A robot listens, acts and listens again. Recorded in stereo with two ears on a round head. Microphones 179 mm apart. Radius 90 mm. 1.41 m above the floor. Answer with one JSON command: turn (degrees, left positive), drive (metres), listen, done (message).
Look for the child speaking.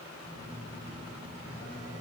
{"listen": true}
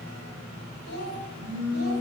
{"turn": 90}
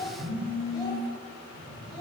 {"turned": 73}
{"turn": 25}
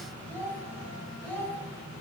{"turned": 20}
{"turn": 10}
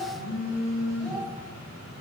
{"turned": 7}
{"done": "Found it: a child speaking, straight ahead."}